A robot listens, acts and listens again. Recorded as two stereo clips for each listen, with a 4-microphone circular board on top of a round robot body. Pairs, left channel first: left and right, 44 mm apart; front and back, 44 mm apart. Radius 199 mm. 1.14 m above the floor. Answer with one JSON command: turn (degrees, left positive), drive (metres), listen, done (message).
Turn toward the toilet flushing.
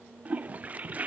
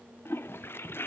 {"turn": -30}
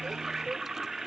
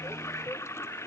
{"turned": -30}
{"turn": -10}
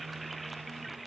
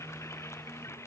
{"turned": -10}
{"done": "Facing the toilet flushing, under 1 m away."}